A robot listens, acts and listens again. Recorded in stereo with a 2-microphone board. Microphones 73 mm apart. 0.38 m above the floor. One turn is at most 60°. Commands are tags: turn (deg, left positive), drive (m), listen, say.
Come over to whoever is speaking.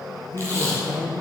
<turn deg="60"/>
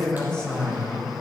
<turn deg="10"/>
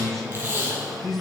<drive m="1.0"/>
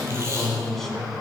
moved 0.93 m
<drive m="1.0"/>
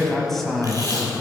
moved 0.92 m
<drive m="1.0"/>
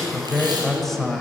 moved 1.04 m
<drive m="1.0"/>
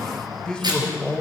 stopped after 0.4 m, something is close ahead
<turn deg="15"/>
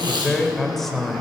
<say>I am next to the man speaking.</say>